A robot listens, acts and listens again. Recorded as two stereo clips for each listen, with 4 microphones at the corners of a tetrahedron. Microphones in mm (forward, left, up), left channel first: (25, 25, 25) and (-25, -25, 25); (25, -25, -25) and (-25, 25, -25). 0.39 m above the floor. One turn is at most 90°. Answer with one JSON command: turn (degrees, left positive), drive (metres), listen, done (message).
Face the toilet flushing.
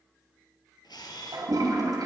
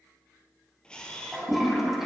{"turn": -90}
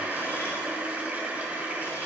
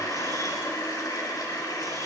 {"turn": -65}
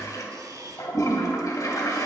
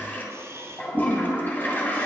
{"turn": 15}
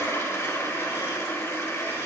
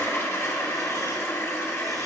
{"done": "Found it: a toilet flushing, straight ahead."}